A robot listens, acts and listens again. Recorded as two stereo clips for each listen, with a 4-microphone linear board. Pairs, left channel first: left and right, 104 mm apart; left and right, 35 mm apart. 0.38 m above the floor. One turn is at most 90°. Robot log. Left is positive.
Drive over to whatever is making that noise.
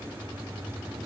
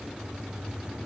cmd idle
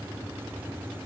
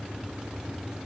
cmd idle
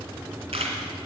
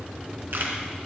cmd yaw -90
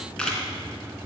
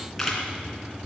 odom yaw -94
note: So it is at 10° left.
cmd yaw +10
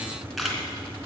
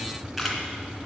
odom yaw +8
cmd fwd 1.0
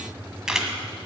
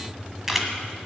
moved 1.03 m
cmd fwd 1.0
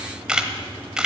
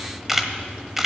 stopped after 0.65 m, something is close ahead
note: The camera shutter is now 10° right.
cmd yaw -10
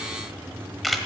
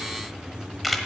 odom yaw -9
end: I am next to the camera shutter.